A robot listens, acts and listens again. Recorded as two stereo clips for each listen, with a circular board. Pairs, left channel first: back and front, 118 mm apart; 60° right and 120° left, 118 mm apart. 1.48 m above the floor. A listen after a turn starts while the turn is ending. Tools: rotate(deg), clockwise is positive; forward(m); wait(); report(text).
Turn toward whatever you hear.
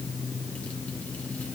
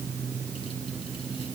wait()
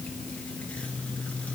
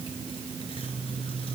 wait()
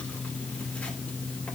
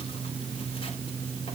report("I can't make out anything to turn to.")